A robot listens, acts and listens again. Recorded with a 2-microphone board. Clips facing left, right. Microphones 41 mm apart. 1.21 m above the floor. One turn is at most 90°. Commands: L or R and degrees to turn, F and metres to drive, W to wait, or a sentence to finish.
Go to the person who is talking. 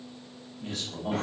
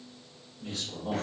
L60
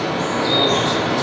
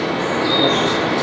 W
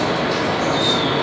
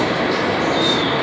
W
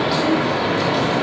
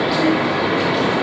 I heard a man speaking, but can't make it out now. It was about straight ahead or 60° left. I did not reach it.